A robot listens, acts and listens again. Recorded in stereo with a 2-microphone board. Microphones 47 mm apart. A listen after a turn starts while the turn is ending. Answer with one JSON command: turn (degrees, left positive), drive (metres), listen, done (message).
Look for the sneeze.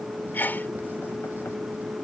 {"turn": 40}
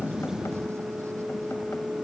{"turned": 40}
{"listen": true}
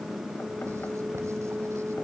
{"done": "I heard a sneeze, but can't make it out now. It was about straight ahead or 100° left."}